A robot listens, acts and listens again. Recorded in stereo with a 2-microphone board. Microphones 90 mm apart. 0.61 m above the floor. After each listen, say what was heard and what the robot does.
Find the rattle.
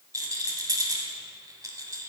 The rattle: about 40° right or 140° right. Turn 40° right.
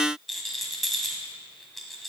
Found it: a rattle, straight ahead.